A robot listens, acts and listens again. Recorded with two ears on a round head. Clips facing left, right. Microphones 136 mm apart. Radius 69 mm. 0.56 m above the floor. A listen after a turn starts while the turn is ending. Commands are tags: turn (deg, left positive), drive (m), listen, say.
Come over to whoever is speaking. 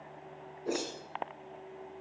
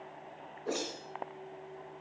<listen/>
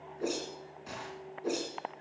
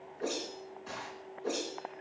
<listen/>
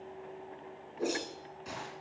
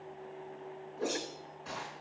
<say>I can't make out anyone speaking, only a whoosh.</say>